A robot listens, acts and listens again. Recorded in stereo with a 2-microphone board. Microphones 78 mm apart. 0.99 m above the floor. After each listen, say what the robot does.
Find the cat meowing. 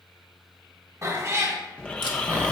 Turn 40° right.
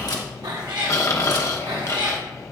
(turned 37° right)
Turn 100° right.
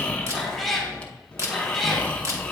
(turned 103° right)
Facing the cat meowing.